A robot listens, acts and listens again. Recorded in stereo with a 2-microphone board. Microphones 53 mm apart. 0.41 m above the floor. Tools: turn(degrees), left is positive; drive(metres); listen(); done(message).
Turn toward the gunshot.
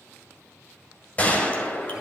turn(degrees=25)
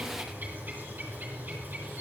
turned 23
listen()
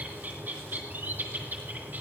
done("I heard a gunshot, but can't make it out now. It was about 5° left or 130° left.")